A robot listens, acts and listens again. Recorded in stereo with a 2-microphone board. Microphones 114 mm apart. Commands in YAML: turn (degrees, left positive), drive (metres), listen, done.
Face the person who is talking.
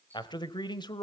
turn: 40
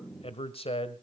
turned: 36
turn: 95
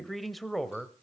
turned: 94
done: "Facing the man speaking, 1 to 2 m away."